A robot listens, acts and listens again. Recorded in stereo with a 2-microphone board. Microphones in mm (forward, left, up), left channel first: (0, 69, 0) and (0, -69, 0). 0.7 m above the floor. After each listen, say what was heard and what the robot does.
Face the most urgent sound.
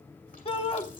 The shout: about 45° left or 135° left. Turn 45° left.
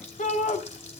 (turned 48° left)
So it is at 85° left. Turn 85° left.
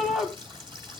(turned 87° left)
Facing the shout.